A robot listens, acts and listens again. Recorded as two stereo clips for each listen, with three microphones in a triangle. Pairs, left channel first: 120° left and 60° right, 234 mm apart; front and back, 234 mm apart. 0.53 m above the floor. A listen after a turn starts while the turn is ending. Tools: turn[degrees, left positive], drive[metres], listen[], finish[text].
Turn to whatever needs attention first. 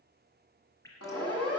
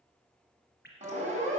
Thought: The siren: 120° left.
Action: turn[120]
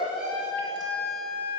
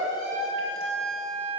Thought: The siren is now 15° left.
Action: turn[15]
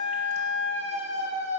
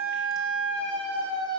Action: finish[Facing the siren, over 4 m away.]